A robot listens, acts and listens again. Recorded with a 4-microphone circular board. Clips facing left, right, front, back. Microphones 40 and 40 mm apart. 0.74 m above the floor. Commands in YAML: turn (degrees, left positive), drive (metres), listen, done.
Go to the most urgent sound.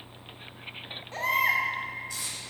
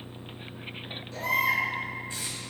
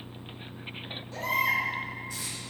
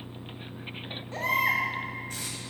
turn: 145
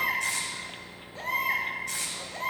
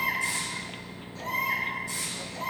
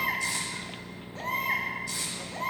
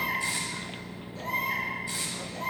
turn: 40
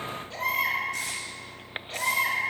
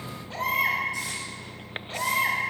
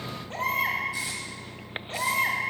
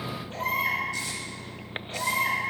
drive: 1.0
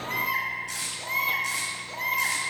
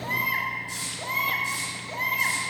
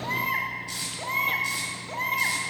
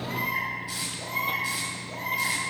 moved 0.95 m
drive: 1.0
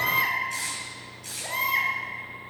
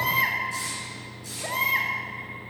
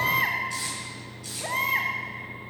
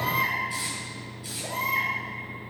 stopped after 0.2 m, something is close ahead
done: "I am next to the baby crying."